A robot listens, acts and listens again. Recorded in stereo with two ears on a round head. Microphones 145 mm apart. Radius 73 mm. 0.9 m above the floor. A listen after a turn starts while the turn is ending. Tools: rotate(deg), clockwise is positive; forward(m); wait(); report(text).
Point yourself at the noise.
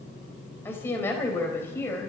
rotate(-30)
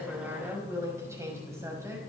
rotate(15)
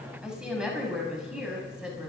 report("Facing the woman speaking.")